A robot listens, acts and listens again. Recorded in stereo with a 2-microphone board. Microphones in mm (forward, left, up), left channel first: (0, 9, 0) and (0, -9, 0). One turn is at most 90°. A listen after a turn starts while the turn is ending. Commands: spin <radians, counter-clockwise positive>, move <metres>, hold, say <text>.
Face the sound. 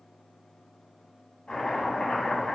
spin 1.05
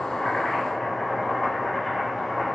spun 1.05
say Found it: chopping, straight ahead.